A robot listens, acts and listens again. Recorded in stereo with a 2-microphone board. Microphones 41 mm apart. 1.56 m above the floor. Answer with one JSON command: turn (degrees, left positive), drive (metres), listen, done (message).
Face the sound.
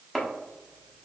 {"turn": 30}
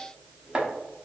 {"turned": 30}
{"turn": -25}
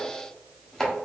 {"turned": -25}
{"turn": 15}
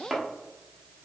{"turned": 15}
{"done": "Found it: chopping, straight ahead."}